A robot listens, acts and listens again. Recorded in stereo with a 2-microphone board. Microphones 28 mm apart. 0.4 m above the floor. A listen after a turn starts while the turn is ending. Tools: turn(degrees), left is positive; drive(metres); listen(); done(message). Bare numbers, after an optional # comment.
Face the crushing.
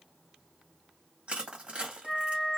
# The crushing: about 50° right or 130° right.
turn(-50)
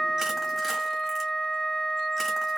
listen()
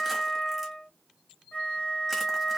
listen()
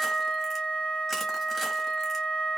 done("I heard crushing, but can't make it out now. It was about straight ahead or 80° right.")